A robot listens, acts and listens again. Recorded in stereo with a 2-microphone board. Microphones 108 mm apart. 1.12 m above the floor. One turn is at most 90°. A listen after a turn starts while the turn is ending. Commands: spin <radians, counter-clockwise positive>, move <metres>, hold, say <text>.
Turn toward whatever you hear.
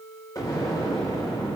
spin 0.61
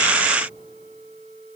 hold
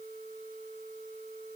say I heard an explosion, but can't make it out now. It was about straight ahead or 110° left.